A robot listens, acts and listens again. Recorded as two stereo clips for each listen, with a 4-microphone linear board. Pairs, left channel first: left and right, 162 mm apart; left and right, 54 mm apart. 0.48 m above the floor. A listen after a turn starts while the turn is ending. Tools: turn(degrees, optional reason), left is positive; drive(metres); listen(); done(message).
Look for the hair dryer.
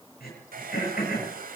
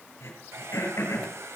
turn(degrees=-60, reason="The hair dryer: about 60° right or 120° right.")
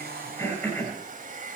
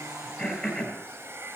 turn(degrees=-55, reason="So it is at 55° right.")
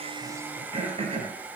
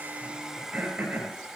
turn(degrees=-10, reason="The hair dryer is now 10° right.")
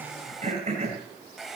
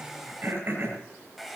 done("Facing the hair dryer, 1 to 2 m away.")